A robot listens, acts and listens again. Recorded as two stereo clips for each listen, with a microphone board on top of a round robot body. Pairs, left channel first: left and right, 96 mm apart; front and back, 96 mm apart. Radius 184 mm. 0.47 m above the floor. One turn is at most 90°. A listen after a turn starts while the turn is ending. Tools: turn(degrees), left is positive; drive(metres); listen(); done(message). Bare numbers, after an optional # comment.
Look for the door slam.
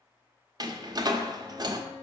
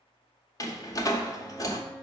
# The door slam: 50° right.
turn(-50)
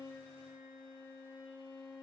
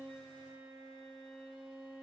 done("Facing where the door slam came from. I can't hear it now.")